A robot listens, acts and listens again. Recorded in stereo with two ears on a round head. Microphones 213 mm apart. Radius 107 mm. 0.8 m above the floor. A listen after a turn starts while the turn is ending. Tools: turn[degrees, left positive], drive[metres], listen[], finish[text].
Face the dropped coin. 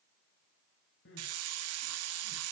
Action: listen[]
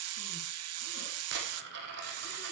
Thought: The dropped coin: about 55° right or 125° right.
Action: turn[-55]
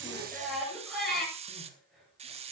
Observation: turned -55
Action: listen[]
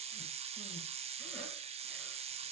Action: finish[I heard a dropped coin, but can't make it out now. It was about straight ahead or 70° right.]